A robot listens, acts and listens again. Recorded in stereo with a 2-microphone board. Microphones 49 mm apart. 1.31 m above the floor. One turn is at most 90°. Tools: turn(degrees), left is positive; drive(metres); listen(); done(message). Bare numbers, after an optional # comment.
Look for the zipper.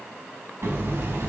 listen()
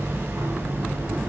listen()
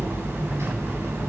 done("I can't make out a zipper to turn to.")